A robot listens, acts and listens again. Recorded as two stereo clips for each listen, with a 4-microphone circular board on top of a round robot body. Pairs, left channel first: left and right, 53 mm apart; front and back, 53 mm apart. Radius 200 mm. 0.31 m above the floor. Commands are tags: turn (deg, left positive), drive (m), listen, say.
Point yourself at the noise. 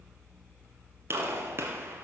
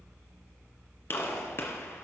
<turn deg="-45"/>
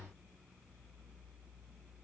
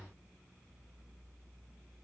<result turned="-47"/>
<say>Facing where the gunshot came from. I can't hear it now.</say>